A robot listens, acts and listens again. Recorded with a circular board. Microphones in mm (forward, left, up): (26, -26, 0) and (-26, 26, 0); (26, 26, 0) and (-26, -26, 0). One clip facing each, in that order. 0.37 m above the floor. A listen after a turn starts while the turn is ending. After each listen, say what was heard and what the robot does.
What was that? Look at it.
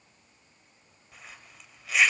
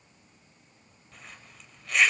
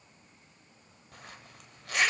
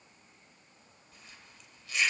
The zipper: 40° left. Turn 40° left.
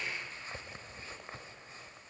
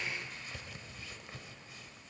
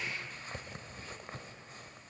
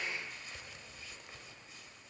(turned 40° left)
Facing the zipper.